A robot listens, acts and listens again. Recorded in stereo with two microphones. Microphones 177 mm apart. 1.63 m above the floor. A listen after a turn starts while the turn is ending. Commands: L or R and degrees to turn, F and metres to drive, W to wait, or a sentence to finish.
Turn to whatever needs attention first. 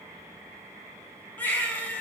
L30
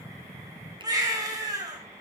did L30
R20
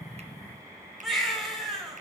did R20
Found it: a baby crying, straight ahead.